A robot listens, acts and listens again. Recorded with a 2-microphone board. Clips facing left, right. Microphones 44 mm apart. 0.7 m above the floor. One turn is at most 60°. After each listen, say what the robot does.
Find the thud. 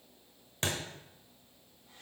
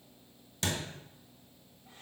Turn 35° left.
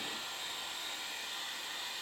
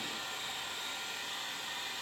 Keep listening.
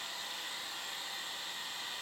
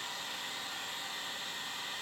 I heard a thud, but can't make it out now. It was about straight ahead or 110° left.